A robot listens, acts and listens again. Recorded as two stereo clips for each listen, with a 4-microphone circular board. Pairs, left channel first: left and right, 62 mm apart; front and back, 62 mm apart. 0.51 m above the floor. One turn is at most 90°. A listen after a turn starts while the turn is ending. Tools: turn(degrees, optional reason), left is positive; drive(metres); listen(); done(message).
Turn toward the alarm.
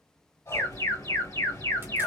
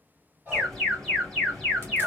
turn(degrees=85, reason="The alarm: 85° left.")
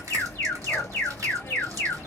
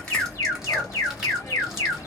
turn(degrees=30, reason="The alarm is now 30° left.")
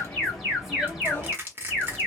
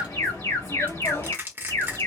done("Found it: an alarm, straight ahead, 1 to 2 m away.")